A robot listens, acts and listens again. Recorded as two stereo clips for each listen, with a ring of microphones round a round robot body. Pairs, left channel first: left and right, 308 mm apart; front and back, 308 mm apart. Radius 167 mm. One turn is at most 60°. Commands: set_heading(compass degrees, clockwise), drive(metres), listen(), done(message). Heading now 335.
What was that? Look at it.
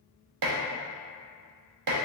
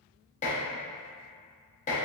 set_heading(35)
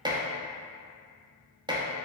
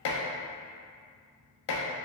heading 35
set_heading(50)
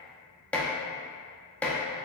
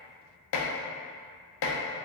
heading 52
done("Facing the dishes clattering.")